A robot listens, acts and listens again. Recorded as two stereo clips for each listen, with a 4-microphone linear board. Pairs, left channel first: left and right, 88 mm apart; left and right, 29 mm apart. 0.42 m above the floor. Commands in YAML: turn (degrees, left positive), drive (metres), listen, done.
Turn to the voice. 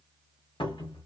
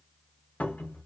listen: true
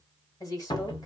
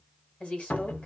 turn: 40
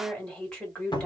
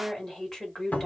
turn: 10
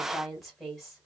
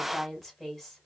done: "Found it: a woman speaking, straight ahead."